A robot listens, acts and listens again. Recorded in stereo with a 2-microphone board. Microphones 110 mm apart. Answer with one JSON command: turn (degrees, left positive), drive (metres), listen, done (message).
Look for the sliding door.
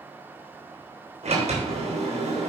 {"turn": -90}
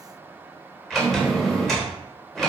{"done": "Found it: a sliding door, straight ahead."}